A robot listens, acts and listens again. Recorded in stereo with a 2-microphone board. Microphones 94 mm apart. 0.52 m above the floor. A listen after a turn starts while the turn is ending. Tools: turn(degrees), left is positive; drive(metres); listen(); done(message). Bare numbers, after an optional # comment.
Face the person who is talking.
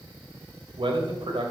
# The man speaking: about 65° right or 115° right.
turn(-65)
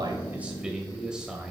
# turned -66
# So it is at 10° right.
turn(-10)
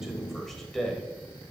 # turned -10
done("Facing the man speaking.")